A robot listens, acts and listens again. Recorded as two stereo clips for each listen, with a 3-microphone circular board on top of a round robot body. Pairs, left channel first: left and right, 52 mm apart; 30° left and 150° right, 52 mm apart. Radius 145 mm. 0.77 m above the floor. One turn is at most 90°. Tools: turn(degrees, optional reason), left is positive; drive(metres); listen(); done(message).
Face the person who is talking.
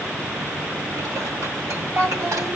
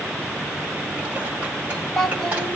turn(degrees=-50, reason="The child speaking: 50° right.")
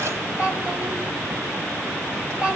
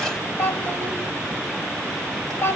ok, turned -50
turn(degrees=-15, reason="The child speaking is now 15° right.")
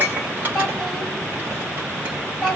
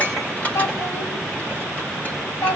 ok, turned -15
done("Facing the child speaking, over 4 m away.")